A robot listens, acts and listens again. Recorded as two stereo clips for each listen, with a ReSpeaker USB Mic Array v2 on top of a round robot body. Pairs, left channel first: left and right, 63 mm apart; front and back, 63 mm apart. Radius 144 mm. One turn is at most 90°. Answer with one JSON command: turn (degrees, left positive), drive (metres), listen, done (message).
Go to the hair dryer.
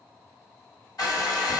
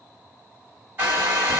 {"turn": 90}
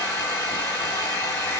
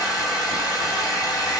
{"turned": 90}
{"turn": 25}
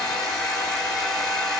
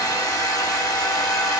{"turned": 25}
{"drive": 1.0}
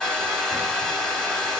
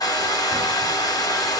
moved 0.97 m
{"drive": 1.0}
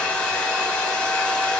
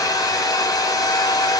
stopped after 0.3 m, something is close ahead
{"turn": 15}
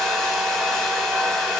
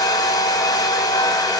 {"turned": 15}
{"done": "I am next to the hair dryer."}